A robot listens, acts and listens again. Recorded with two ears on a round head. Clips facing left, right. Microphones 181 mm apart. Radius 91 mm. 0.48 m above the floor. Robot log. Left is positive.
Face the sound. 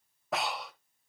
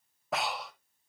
cmd yaw +30
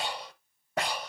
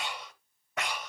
note: So it is at 150° left.
cmd yaw +150
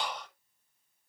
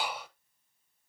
end: Facing the breathing.